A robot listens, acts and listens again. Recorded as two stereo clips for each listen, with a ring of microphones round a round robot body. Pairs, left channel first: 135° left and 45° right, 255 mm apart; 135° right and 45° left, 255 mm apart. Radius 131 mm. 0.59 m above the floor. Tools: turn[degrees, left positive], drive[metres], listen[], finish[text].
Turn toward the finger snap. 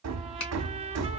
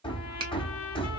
Thought: The finger snap: 115° left.
Action: turn[115]
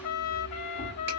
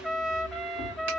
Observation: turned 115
Action: listen[]
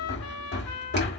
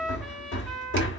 Action: listen[]
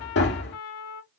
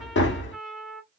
Action: finish[I heard a finger snap from this way, but can't make it out now.]